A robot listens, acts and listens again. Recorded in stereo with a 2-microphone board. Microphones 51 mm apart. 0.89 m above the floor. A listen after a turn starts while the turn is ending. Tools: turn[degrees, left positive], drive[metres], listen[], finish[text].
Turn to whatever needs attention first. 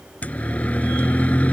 Thought: The siren: about 30° left or 150° left.
Action: turn[30]
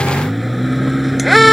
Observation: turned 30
Action: finish[Found it: a siren, straight ahead.]